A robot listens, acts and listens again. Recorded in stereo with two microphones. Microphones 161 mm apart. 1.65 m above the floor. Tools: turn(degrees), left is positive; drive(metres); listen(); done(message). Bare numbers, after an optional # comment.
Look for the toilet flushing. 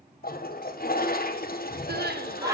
# The toilet flushing: about 70° left or 110° left.
turn(70)
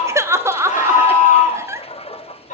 # So it is at 40° left.
turn(40)
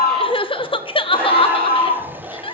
# The toilet flushing is now 10° right.
turn(-10)
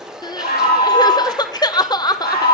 done("Facing the toilet flushing, 1 to 2 m away.")